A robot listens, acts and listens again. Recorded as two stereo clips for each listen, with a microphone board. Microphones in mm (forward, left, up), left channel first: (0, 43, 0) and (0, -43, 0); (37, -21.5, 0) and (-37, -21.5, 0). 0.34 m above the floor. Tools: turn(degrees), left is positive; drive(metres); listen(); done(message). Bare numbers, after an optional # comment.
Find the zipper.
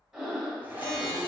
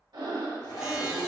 # The zipper: 20° right.
turn(-20)
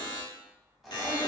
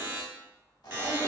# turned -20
done("Facing the zipper, under 1 m away.")